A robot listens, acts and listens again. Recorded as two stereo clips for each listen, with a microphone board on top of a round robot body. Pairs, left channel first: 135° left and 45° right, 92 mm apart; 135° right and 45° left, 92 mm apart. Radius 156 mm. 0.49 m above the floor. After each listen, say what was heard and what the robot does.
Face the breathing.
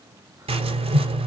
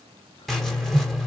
Keep listening.
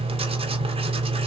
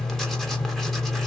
Keep listening.
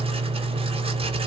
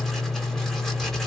I can't make out breathing, only writing.